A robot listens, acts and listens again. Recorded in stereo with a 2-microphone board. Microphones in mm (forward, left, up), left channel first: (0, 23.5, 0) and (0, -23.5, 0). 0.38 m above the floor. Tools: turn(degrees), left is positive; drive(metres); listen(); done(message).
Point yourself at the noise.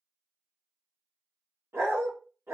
turn(degrees=-75)
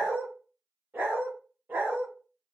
turn(degrees=-45)
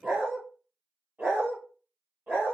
turn(degrees=-35)
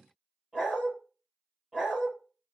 done("Facing the dog barking, 2 to 4 m away.")